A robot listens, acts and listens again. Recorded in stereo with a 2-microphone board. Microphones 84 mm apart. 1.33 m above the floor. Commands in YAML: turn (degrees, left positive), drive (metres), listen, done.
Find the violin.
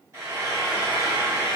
listen: true
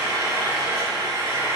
listen: true
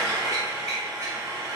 done: "I can't make out a violin to turn to."